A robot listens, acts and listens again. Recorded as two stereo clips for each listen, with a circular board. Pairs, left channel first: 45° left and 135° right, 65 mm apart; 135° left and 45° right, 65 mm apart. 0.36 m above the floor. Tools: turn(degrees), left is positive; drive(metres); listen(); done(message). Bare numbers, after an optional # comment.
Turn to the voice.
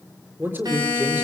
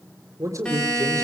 # The man speaking: 80° right.
turn(-80)
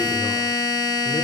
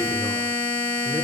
listen()
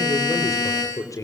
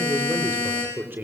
# The man speaking is now 10° left.
turn(10)
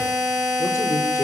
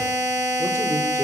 listen()
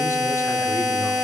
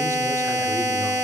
listen()
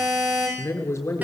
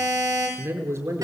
done("Facing the man speaking, over 4 m away.")